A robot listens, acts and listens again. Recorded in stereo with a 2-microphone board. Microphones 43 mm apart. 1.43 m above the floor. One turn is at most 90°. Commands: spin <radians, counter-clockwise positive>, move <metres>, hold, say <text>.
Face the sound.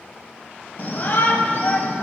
spin 0.70
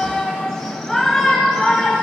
say Found it: a shout, straight ahead, 1 to 2 m away.